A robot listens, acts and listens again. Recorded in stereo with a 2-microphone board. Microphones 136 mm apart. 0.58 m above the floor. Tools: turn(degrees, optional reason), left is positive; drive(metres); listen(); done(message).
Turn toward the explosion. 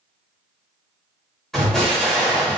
turn(degrees=30)
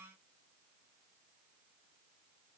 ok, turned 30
listen()
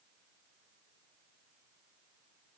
done("I heard an explosion, but can't make it out now. It was about 25° right or 145° left.")